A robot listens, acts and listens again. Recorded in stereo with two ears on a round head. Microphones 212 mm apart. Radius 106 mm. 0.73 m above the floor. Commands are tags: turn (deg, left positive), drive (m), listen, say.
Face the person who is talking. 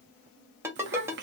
<turn deg="-50"/>
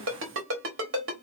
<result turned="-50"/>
<turn deg="-70"/>
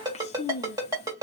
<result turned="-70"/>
<turn deg="30"/>
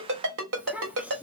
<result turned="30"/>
<say>Facing the child speaking.</say>